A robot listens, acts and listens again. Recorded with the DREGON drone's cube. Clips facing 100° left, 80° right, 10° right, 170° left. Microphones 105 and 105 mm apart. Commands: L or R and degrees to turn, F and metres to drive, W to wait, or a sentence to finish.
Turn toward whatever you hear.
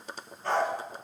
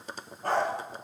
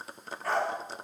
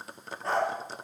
R125
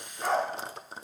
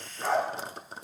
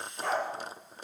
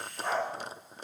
Facing the dog barking.